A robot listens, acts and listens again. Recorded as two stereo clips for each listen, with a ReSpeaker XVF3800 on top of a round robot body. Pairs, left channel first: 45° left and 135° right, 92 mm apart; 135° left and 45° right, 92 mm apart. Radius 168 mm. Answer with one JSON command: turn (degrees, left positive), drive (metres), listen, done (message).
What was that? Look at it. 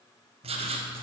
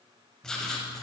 {"turn": -140}
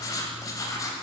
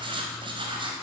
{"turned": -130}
{"turn": -10}
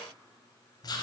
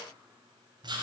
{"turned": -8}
{"done": "Found it: writing, straight ahead."}